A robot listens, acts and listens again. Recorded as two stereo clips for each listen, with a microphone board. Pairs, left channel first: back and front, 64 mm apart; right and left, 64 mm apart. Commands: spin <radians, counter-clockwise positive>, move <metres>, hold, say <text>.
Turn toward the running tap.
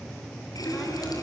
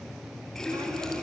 spin -2.97
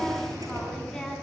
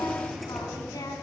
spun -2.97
say Facing the running tap, over 4 m away.